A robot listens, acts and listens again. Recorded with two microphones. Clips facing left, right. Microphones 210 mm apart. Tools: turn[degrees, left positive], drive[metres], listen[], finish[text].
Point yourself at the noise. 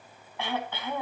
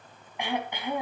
Thought: The throat clearing: about 15° right or 165° right.
Action: turn[-15]
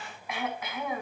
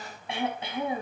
Thought: So it is at 150° right.
Action: turn[-150]
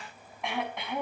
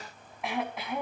Action: finish[Facing the throat clearing, over 4 m away.]